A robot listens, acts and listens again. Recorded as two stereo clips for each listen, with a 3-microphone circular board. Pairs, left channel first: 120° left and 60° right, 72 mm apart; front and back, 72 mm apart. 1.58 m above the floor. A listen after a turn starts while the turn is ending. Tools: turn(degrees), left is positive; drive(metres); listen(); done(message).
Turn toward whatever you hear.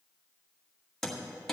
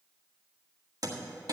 turn(degrees=-155)
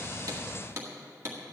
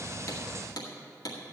turn(degrees=-10)
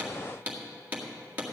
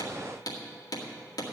done("Facing the hammering.")